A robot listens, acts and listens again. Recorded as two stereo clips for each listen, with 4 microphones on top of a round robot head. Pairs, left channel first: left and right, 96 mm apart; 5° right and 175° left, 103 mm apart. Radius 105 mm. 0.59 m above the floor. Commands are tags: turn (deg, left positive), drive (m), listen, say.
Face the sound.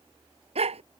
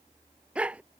<turn deg="-105"/>
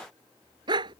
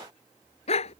<turn deg="-35"/>
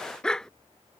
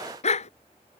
<say>Facing the dog barking.</say>